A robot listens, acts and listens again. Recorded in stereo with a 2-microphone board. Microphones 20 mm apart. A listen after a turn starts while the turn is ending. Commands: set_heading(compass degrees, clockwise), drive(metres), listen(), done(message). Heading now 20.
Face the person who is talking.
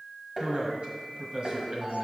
set_heading(80)
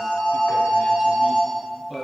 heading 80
set_heading(105)
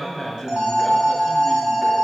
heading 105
set_heading(90)
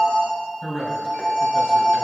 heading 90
done("Found it: a man speaking, straight ahead.")